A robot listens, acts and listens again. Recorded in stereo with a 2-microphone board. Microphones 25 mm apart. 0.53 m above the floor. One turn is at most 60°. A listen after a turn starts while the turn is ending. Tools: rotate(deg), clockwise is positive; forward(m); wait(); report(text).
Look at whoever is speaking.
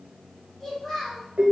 rotate(-30)
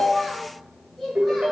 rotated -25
rotate(-30)
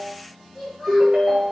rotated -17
rotate(-30)
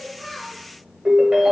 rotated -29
wait()
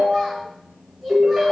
rotate(-30)
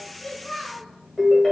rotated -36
rotate(-60)
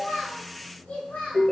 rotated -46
rotate(-60)
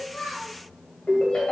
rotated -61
rotate(-40)
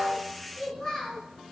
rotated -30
rotate(-10)
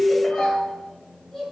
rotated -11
report("Found it: a child speaking, straight ahead.")